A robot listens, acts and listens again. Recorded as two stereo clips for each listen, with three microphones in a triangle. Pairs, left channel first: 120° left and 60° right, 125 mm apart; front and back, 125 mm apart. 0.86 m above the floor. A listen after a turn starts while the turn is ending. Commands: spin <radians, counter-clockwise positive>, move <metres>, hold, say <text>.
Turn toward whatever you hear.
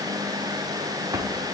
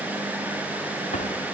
say Found it: a drawer, straight ahead, 1 to 2 m away.